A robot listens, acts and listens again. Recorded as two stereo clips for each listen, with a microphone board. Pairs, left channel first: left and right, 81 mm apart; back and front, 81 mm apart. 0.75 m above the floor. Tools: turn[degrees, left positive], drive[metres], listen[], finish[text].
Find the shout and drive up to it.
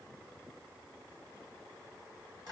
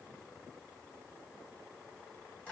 Action: listen[]
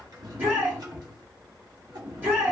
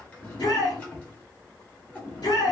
Thought: The shout: 155° right.
Action: turn[-155]
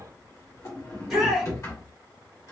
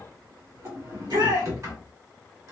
Action: drive[1.0]
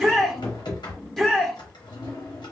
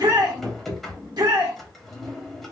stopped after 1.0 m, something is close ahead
Action: finish[Arrived at the shout, straight ahead.]